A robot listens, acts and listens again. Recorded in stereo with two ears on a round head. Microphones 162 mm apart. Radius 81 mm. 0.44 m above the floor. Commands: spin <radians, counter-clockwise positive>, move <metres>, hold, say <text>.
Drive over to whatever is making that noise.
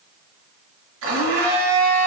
spin -1.57
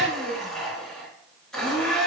move 1.0
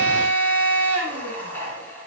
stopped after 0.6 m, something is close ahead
spin 0.17
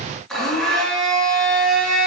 say Something is in my way. I am facing the blender but have not reached it.